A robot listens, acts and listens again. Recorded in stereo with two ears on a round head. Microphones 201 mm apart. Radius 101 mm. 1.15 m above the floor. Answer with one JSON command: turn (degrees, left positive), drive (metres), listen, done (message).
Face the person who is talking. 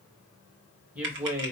{"turn": -30}
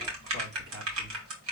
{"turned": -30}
{"turn": -125}
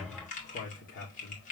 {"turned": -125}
{"turn": 45}
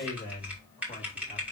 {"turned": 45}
{"turn": 25}
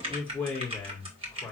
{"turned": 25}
{"done": "Found it: a man speaking, straight ahead, 2 to 4 m away."}